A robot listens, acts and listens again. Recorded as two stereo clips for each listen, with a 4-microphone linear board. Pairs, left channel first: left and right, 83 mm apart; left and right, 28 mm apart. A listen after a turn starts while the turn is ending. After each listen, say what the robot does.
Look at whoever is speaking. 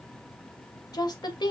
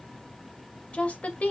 Turn 60° left.
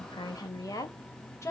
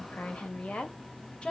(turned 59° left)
Turn 35° left.
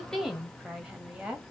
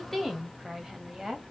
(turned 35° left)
Turn 15° right.
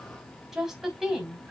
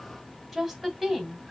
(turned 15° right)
Turn 10° right.
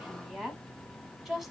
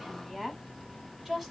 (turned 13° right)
Found it: a woman speaking, straight ahead, 2 to 4 m away.